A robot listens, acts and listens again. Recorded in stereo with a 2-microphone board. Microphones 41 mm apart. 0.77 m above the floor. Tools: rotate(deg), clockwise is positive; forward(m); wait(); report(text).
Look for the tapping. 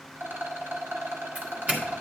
wait()
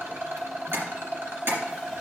rotate(90)
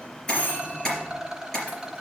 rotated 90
rotate(-10)
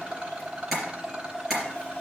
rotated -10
report("Found it: tapping, straight ahead, 2 to 4 m away.")